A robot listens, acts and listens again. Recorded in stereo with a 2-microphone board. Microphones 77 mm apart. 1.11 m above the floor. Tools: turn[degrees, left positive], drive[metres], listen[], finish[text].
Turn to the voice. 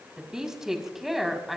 Action: turn[30]
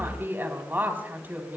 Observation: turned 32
Thought: So it is at 20° right.
Action: turn[-20]
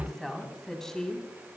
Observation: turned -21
Thought: The woman speaking is now 10° left.
Action: turn[10]
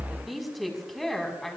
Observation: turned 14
Action: finish[Found it: a woman speaking, straight ahead, over 4 m away.]